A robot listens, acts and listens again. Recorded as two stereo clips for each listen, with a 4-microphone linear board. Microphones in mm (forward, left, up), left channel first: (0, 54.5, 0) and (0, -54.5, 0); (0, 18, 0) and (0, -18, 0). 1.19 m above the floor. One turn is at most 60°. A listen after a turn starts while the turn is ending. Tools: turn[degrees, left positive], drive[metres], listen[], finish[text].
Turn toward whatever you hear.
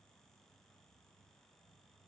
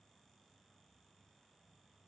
Action: listen[]
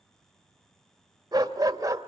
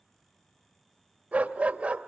Thought: The dog barking: about 30° right or 150° right.
Action: turn[-30]
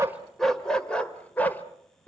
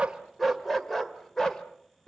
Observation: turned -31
Thought: So it is at 15° left.
Action: turn[15]
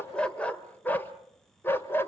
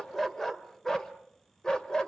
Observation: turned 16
Thought: The dog barking is now 20° left.
Action: turn[20]
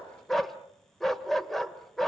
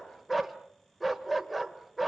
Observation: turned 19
Action: finish[Facing the dog barking, 1 to 2 m away.]